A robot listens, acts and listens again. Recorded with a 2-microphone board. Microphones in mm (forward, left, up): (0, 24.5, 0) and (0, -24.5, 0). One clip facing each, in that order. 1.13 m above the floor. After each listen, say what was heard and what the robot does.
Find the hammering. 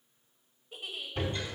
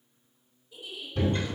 Turn 30° left.
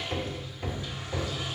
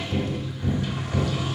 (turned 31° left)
So it is at 135° left. Turn 135° left.
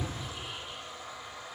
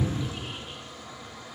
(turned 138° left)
Found it: hammering, straight ahead, 1 to 2 m away.